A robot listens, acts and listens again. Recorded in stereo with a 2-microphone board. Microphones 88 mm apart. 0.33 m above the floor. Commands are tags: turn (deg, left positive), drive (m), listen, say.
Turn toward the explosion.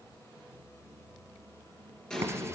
<turn deg="30"/>
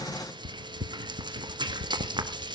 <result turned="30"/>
<listen/>
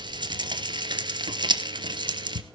<say>I heard an explosion, but can't make it out now. It was about 20° right or 140° left.</say>